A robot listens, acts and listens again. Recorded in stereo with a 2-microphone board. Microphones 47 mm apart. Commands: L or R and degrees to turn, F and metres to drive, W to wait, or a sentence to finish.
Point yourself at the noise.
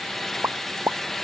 R70
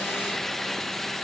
W
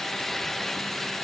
I heard a pop, but can't make it out now. It was about straight ahead or 40° right.